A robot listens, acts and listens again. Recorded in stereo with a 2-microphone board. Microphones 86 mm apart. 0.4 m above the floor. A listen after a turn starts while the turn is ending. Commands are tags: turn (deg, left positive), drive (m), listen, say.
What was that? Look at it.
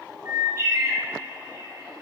<turn deg="-35"/>
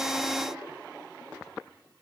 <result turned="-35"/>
<listen/>
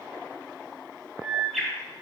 <say>Found it: a bird, straight ahead.</say>